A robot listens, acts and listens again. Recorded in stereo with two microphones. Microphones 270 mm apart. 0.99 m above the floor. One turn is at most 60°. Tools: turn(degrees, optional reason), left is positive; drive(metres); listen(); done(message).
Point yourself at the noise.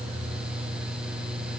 listen()
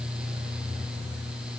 listen()
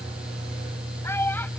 turn(degrees=30)
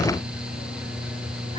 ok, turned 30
listen()
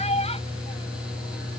turn(degrees=60, reason="So it is at 155° left.")
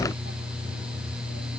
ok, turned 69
turn(degrees=60, reason="Nothing new. It was at 90° left.")
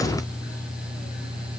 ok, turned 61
turn(degrees=25, reason="Nothing new. It was at 25° left.")
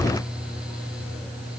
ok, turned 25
done("I heard a child speaking from this way, but can't make it out now.")